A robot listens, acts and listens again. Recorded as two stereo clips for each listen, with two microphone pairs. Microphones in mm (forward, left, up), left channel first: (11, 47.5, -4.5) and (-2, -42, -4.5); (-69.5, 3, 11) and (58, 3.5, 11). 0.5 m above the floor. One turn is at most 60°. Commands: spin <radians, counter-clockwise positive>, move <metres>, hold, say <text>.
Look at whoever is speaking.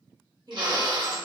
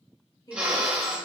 spin -1.05
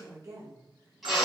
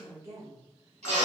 spin -1.05
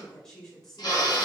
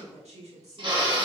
say Facing the woman speaking.